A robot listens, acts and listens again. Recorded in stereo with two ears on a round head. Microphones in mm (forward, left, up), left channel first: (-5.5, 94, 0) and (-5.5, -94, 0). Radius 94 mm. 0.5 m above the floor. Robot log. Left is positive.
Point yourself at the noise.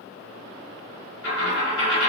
note: The dropped coin: about 60° left or 120° left.
cmd yaw +60
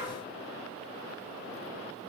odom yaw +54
cmd idle
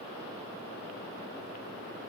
end: I heard a dropped coin, but can't make it out now. It was about 10° left or 65° left.